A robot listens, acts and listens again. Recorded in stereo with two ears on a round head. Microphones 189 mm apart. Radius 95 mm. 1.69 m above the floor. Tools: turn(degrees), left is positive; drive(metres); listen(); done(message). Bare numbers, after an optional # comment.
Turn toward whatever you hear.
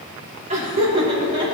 # The laughter: about 25° right or 155° right.
turn(-25)
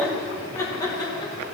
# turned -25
# So it is at 20° left.
turn(20)
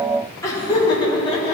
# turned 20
# The laughter is now 25° left.
turn(25)
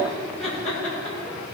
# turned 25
# The laughter is now 10° left.
turn(10)
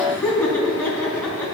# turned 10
done("Found it: laughter, straight ahead, 2 to 4 m away.")